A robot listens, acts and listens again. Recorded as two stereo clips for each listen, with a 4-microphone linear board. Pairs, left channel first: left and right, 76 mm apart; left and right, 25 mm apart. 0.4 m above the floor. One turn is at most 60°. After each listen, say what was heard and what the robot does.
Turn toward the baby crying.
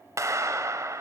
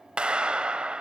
Keep listening.
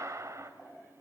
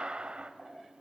Keep listening.
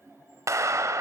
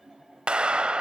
I can't make out a baby crying to turn to.